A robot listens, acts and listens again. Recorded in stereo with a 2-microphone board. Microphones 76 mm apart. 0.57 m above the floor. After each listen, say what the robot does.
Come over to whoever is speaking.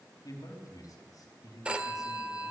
Turn 50° left.
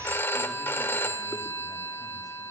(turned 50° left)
Keep listening.
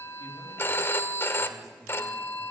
Keep listening.
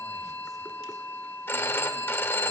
I heard a man speaking, but can't make it out now. It was about straight ahead or 80° left. I did not reach it.